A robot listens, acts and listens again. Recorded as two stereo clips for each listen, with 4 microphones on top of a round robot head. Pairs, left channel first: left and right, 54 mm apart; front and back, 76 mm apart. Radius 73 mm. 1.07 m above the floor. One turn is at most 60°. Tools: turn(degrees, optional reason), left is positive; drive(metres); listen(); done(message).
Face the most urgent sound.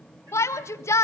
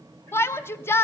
turn(degrees=60, reason="The shout: 60° left.")
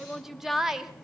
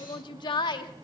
done("Found it: a shout, straight ahead.")